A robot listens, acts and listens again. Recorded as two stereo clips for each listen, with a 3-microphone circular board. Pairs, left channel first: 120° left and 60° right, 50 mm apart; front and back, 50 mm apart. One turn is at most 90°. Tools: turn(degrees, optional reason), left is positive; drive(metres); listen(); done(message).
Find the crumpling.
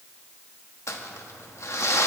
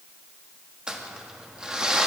turn(degrees=90, reason="The crumpling: 110° left.")
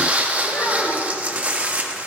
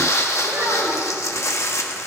done("Found it: crumpling, straight ahead.")